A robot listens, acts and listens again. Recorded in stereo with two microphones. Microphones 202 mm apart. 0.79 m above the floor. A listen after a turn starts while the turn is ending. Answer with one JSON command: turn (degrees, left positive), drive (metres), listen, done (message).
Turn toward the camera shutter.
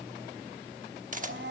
{"turn": -40}
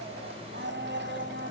{"listen": true}
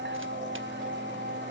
{"listen": true}
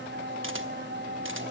{"done": "I heard a camera shutter, but can't make it out now. It was about straight ahead or 100° right."}